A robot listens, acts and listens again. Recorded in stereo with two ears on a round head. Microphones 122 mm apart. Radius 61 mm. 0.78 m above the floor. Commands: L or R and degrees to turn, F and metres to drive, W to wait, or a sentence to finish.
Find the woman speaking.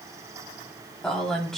L30
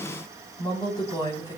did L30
L150
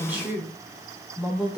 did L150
R10
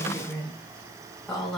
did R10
Found it: a woman speaking, straight ahead.